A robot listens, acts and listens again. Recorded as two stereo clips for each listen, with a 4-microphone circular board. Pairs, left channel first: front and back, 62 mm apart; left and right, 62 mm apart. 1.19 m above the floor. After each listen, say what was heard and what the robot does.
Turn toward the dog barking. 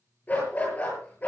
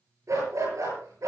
The dog barking: 65° right. Turn 65° right.
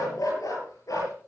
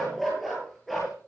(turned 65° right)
Facing the dog barking.